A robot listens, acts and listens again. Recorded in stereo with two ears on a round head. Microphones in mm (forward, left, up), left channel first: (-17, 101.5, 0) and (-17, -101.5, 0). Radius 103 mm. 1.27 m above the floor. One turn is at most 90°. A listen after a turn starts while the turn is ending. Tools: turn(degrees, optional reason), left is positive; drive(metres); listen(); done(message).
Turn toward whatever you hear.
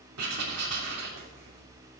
turn(degrees=-90)
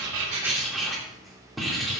done("Facing the writing, 2 to 4 m away.")